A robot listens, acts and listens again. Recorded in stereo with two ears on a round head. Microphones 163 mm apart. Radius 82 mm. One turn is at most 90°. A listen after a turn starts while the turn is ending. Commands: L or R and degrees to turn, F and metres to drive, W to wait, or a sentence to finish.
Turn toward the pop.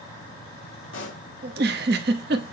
L90
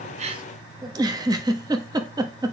Facing where the pop came from. I can't hear it now.